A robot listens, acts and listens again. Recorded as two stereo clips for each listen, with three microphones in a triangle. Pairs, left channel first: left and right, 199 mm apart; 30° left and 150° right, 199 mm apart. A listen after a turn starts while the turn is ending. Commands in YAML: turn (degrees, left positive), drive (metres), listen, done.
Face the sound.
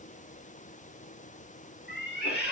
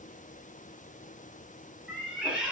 turn: 125
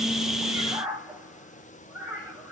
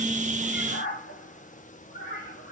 done: "Found it: a cat meowing, straight ahead."